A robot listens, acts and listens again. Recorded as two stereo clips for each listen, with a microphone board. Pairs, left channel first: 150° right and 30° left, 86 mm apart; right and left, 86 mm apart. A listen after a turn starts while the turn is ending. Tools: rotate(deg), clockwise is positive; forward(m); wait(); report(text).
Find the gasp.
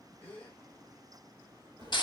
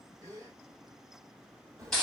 rotate(-140)
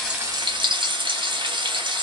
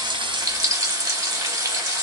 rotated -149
rotate(10)
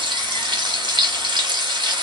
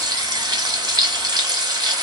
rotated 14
report("I heard a gasp from this way, but can't make it out now.")